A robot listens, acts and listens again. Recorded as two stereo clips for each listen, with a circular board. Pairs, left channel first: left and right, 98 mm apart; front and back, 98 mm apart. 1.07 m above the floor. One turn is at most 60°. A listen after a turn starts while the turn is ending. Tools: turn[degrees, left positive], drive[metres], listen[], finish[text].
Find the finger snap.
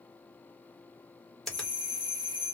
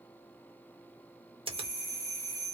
Thought: The finger snap: 175° left.
Action: turn[60]
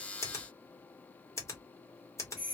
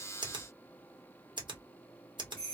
Thought: The finger snap is now 150° left.
Action: turn[60]
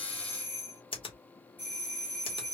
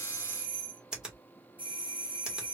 Thought: The finger snap is now 100° left.
Action: turn[60]
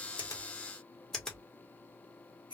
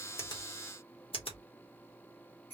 Thought: The finger snap is now 10° left.
Action: turn[10]
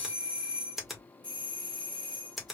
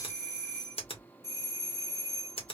Action: finish[Found it: a finger snap, straight ahead.]